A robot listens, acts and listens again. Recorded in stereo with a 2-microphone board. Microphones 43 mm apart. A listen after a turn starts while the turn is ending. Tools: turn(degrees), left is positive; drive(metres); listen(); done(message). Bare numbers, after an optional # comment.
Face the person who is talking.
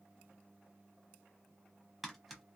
listen()
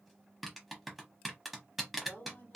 # The woman speaking: about 45° left or 135° left.
turn(45)
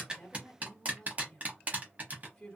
# So it is at 10° left.
turn(10)
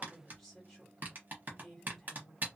done("Facing the woman speaking, 1 to 2 m away.")